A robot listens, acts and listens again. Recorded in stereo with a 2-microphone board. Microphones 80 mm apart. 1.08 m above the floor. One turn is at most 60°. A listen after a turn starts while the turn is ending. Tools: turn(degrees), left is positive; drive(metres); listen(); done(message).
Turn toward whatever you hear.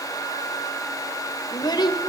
turn(degrees=60)
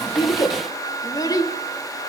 turn(degrees=50)
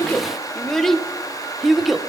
done("Found it: a child speaking, straight ahead.")